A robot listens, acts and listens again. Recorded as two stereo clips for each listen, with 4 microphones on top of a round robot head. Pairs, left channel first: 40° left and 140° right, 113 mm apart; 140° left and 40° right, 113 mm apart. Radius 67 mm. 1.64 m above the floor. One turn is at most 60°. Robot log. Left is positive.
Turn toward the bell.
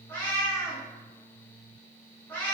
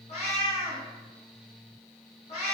cmd idle
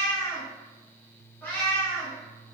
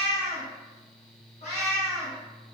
cmd idle
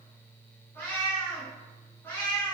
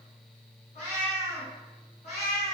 end: I can't make out a bell to turn to.